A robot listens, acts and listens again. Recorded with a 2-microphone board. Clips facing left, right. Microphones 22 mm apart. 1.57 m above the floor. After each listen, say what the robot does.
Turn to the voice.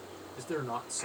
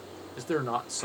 Turn 55° right.
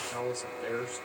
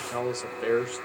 Turn 65° right.
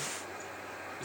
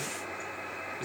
Keep listening.
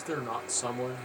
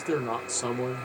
Turn 10° right.
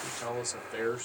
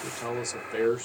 Found it: a man speaking, straight ahead.